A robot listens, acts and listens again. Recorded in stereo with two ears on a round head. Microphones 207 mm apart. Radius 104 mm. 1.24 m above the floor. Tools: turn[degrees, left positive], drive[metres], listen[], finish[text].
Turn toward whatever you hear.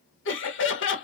Thought: The laughter: about 55° left or 125° left.
Action: turn[55]
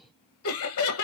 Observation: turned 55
Thought: So it is at 65° left.
Action: turn[65]
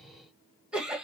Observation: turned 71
Action: finish[Found it: laughter, straight ahead.]